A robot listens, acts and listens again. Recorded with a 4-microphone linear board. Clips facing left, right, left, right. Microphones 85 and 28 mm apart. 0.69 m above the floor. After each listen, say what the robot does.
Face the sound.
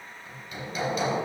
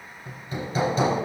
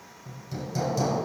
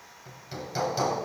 Turn 35° right.
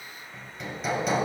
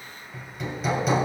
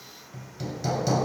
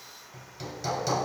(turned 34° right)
Found it: hammering, straight ahead.